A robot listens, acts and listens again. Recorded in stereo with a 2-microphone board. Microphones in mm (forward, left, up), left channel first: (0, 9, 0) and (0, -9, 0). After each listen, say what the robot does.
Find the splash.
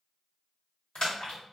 Turn 60° left.
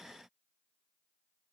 Keep listening.
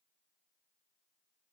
I heard a splash, but can't make it out now. It was about straight ahead or 60° left.